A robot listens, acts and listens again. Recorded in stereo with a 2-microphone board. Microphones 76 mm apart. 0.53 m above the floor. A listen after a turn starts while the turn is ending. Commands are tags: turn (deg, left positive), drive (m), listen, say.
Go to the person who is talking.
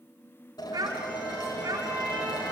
<turn deg="-60"/>
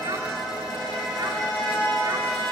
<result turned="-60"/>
<listen/>
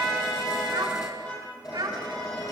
<turn deg="-60"/>
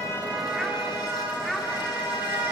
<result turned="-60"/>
<drive m="1.0"/>
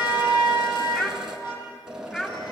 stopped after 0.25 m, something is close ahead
<say>Blocked. The child speaking is further on, straight ahead.</say>